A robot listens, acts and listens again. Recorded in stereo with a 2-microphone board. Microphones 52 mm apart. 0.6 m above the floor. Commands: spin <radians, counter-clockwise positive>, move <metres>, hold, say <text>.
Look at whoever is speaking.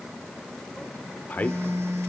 spin 0.61
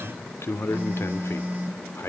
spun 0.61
spin 1.83
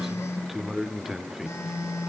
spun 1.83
say Found it: a man speaking, straight ahead, 1 to 2 m away.